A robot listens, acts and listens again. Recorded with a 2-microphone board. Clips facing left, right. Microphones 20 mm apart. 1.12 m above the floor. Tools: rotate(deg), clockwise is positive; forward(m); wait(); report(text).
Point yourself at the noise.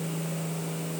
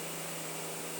wait()
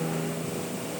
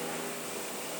wait()
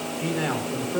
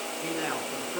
rotate(-60)
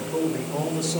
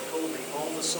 report("Facing the man speaking.")